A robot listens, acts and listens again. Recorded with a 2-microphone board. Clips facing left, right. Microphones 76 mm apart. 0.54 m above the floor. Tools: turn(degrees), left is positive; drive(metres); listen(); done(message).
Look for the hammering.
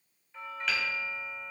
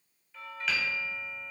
turn(degrees=30)
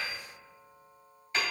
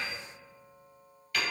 turn(degrees=155)
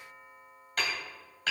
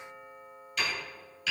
turn(degrees=50)
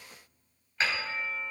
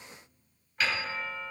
turn(degrees=30)
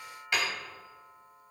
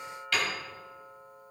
turn(degrees=20)
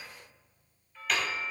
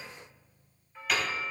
done("Facing the hammering, 2 to 4 m away.")